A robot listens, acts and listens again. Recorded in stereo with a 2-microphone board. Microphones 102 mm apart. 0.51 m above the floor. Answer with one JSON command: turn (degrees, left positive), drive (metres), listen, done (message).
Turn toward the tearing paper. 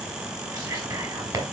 {"listen": true}
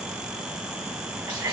{"listen": true}
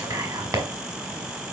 {"done": "I can't make out tearing paper to turn to."}